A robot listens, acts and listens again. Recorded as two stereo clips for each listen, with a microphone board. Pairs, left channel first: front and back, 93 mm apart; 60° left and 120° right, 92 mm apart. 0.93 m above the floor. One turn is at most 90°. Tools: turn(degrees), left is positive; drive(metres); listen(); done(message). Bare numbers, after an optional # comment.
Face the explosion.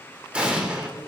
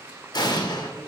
# The explosion: 100° left.
turn(90)
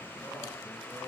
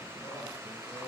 # Nothing new. It was at 10° left.
turn(10)
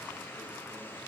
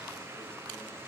done("I heard an explosion from this way, but can't make it out now.")